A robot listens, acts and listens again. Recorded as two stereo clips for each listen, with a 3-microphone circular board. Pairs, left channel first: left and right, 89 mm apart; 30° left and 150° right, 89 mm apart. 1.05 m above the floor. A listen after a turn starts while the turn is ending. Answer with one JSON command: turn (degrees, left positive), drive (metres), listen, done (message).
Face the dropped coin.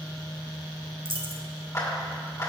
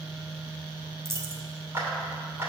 {"turn": -90}
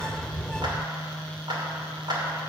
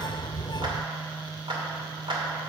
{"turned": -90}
{"done": "I heard a dropped coin from this way, but can't make it out now."}